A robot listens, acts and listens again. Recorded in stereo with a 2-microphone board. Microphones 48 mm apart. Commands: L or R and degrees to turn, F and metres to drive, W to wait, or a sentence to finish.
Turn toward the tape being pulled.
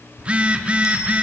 W
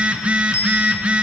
W
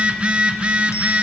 I can't make out tape being pulled to turn to.